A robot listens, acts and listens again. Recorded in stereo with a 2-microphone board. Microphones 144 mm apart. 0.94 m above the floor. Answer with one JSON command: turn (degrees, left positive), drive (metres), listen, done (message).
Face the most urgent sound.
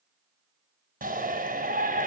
{"turn": -90}
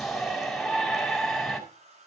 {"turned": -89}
{"done": "Found it: a shout, straight ahead, 2 to 4 m away."}